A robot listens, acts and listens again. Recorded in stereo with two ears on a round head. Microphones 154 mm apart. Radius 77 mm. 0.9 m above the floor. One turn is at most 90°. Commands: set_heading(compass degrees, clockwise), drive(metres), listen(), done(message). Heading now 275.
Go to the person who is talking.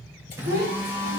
set_heading(335)
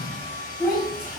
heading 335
drive(1.0)
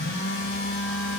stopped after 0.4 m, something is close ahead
listen()
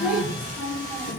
done("Something is in my way. I am facing the child speaking but have not reached it.")